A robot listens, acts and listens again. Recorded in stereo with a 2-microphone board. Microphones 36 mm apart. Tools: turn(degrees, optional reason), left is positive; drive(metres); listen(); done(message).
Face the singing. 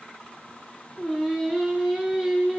turn(degrees=-30)
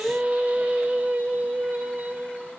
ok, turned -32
turn(degrees=-130, reason="So it is at 130° right.")
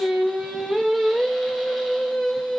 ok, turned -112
turn(degrees=-10, reason="The singing is now 10° right.")
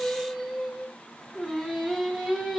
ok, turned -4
done("Found it: singing, straight ahead.")